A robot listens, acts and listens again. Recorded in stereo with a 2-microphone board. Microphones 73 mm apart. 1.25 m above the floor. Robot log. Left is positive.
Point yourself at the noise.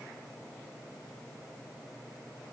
cmd idle
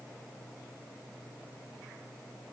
cmd idle
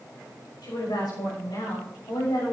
cmd yaw +90
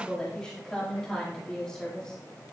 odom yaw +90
note: So it is at 10° left.
cmd yaw +10
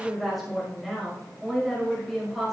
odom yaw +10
end: Facing the woman speaking.